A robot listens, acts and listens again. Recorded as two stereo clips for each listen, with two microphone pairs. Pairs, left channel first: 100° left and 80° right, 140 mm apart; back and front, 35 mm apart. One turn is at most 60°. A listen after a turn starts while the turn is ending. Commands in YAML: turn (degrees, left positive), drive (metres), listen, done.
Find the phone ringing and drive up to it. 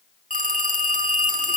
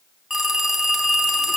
turn: -60
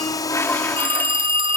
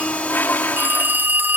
turn: -30
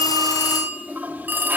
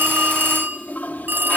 drive: 1.0
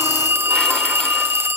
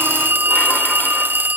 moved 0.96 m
drive: 1.0
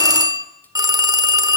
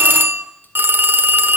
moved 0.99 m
turn: -10
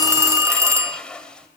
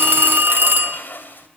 drive: 1.0
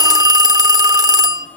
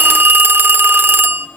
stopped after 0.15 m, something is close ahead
turn: -10
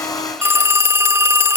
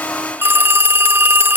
done: "I am next to the phone ringing."